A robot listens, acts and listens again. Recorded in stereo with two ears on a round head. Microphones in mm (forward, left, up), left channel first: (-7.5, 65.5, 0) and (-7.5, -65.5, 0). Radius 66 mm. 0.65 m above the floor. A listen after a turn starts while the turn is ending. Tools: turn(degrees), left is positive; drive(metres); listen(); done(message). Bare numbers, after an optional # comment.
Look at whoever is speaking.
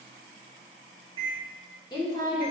# The woman speaking: about 30° left or 150° left.
turn(30)
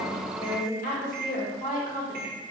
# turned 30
# So it is at 110° left.
turn(110)
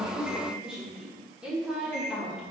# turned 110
# The woman speaking is now 10° right.
turn(-10)
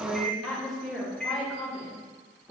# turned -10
done("Facing the woman speaking, 1 to 2 m away.")